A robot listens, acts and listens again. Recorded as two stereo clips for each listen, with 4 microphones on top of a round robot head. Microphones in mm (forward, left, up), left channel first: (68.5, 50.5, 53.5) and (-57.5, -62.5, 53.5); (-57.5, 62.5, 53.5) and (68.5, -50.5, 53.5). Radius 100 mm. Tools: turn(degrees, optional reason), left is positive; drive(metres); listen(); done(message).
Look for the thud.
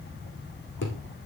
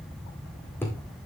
turn(degrees=60, reason="The thud: 60° left.")
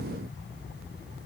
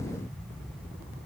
done("I heard a thud from this way, but can't make it out now.")